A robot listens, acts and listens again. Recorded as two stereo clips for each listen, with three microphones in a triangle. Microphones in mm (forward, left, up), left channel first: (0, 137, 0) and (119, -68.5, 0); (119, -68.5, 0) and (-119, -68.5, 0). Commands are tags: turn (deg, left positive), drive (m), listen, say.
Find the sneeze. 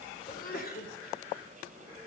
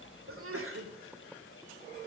<turn deg="165"/>
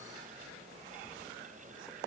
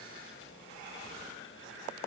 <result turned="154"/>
<turn deg="15"/>
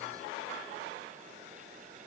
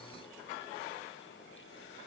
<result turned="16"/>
<say>I heard a sneeze from this way, but can't make it out now.</say>